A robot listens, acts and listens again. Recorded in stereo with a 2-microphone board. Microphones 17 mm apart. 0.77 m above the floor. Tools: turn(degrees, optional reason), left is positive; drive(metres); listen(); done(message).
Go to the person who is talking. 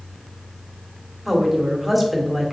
turn(degrees=-30)
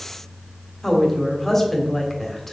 turn(degrees=15, reason="So it is at 15° left.")
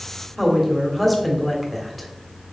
drive(metres=1.0)
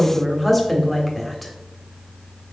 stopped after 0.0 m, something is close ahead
done("Blocked. The woman speaking is further on, straight ahead.")